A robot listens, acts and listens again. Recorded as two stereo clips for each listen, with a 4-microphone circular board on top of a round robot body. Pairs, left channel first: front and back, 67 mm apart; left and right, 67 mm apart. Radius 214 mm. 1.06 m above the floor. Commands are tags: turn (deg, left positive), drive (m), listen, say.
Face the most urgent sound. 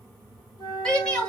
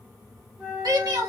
<turn deg="-80"/>
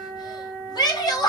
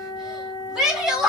<turn deg="-10"/>
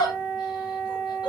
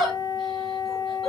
<say>Facing the shout, 2 to 4 m away.</say>